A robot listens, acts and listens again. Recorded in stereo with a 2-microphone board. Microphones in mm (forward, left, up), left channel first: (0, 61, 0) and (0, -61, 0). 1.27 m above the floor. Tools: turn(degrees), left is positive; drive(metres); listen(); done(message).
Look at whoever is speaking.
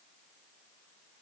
listen()
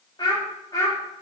turn(degrees=30)
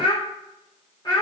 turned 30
turn(degrees=35)
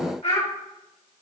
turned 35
turn(degrees=115)
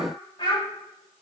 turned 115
turn(degrees=40)
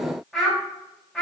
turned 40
done("Found it: a child speaking, straight ahead, 2 to 4 m away.")